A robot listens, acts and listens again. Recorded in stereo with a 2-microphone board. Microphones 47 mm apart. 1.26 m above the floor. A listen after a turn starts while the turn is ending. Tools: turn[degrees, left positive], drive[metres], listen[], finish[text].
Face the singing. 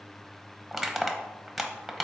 Action: listen[]
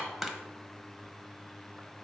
Action: listen[]
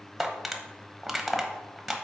Action: finish[I can't make out singing to turn to.]